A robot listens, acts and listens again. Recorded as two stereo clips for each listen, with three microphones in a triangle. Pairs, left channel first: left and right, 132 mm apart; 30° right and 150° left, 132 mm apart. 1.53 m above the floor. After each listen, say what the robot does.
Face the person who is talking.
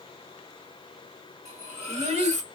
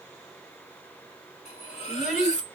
Turn 130° right.
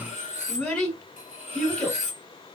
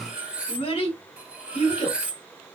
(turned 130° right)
Found it: a child speaking, straight ahead, 2 to 4 m away.